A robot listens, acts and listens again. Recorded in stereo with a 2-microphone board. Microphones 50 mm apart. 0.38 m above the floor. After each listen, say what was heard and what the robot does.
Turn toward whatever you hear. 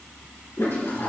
The toilet flushing: about 55° left or 125° left. Turn 55° left.
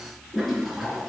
Found it: a toilet flushing, straight ahead.